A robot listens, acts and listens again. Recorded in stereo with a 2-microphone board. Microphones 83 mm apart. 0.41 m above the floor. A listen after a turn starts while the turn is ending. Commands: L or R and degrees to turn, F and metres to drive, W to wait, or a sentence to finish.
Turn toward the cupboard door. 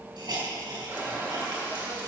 R30
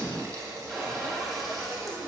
Found it: a cupboard door, straight ahead, over 4 m away.